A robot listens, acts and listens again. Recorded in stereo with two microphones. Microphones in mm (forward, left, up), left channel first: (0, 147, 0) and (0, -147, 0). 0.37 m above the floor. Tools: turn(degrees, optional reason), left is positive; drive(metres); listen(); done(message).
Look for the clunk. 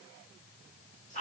listen()
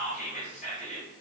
listen()
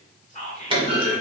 turn(degrees=-20, reason="The clunk: about 20° right or 160° right.")
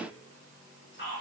listen()
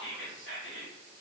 done("I heard a clunk, but can't make it out now. It was about straight ahead or 140° right.")